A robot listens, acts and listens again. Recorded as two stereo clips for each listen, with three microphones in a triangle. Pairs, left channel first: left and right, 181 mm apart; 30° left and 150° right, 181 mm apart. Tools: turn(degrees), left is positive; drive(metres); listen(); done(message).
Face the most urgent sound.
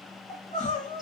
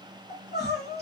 turn(degrees=45)
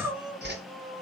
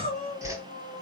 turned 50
done("Found it: crying, straight ahead.")